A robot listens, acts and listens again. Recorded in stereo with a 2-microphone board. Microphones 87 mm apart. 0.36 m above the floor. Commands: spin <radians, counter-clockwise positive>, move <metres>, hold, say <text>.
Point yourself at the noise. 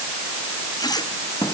spin 0.87
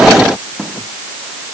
say Found it: a squeak, straight ahead.